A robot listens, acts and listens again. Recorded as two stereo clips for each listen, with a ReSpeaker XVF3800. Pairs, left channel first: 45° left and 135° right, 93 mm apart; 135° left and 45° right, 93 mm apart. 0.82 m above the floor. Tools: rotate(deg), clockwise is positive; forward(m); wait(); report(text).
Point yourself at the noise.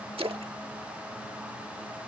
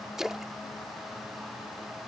rotate(130)
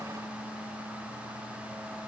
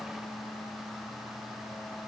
report("I heard a splash from this way, but can't make it out now.")